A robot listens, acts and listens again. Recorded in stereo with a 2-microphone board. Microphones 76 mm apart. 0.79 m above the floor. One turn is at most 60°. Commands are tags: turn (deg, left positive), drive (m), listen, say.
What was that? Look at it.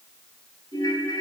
<turn deg="60"/>
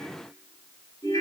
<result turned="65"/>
<turn deg="50"/>
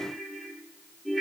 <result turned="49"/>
<say>Facing the ringtone, 2 to 4 m away.</say>